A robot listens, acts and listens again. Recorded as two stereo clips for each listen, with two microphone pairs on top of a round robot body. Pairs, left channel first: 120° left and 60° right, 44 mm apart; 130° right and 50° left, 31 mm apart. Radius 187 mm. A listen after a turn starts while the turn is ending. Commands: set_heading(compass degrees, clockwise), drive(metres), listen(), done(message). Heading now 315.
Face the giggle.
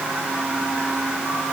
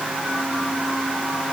listen()
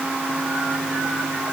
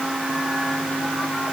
listen()
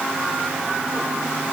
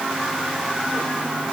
done("I can't make out a giggle.")